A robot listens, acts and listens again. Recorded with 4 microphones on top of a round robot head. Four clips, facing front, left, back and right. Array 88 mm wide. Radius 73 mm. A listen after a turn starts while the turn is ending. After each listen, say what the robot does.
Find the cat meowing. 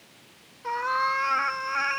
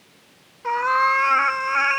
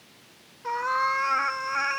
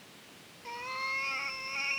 Turn 95° left.
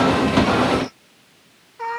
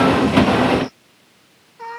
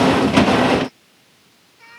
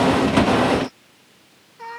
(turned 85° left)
Turn 10° left.
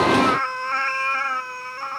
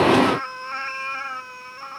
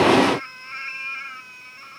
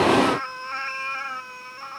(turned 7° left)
Facing the cat meowing.